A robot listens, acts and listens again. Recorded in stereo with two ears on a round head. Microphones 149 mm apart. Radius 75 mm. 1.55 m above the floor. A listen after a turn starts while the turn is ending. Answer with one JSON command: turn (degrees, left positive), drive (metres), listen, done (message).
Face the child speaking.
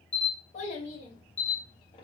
{"turn": 30}
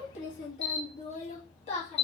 {"turn": 40}
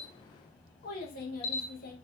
{"turn": 125}
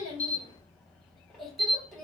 {"done": "Found it: a child speaking, straight ahead, 2 to 4 m away."}